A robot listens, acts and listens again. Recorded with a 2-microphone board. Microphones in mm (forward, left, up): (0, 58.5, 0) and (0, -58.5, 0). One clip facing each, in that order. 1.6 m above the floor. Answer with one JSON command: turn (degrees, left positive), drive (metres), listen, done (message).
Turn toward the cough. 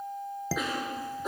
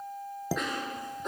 {"turn": 30}
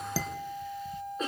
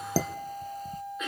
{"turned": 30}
{"turn": 145}
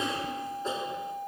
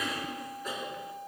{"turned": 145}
{"turn": 30}
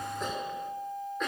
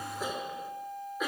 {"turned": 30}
{"done": "Found it: a cough, straight ahead, over 4 m away."}